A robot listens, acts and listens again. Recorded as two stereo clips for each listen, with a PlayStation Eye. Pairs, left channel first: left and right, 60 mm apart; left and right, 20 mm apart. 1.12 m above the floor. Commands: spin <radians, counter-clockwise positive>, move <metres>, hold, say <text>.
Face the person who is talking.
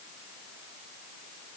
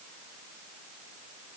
hold
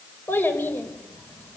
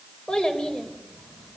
spin 0.61
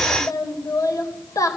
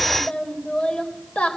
spin 1.92
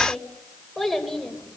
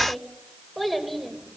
say Facing the child speaking.